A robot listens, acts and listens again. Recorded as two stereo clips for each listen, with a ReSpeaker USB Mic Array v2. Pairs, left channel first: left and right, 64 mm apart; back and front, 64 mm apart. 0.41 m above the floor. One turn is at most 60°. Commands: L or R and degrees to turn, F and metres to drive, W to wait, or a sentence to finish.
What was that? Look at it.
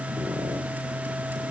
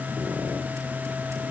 W
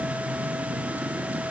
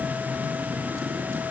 W
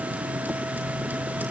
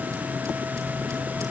I can't make out anything.